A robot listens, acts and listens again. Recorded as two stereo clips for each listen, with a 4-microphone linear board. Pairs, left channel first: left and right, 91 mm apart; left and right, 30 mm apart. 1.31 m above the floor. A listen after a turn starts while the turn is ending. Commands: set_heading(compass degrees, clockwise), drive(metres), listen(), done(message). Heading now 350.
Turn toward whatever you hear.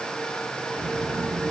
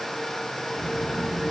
set_heading(320)
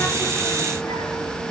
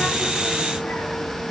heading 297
set_heading(192)
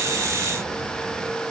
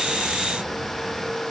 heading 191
set_heading(211)
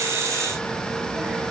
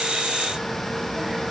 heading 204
set_heading(219)
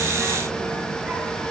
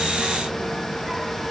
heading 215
done("Found it: a child speaking, straight ahead.")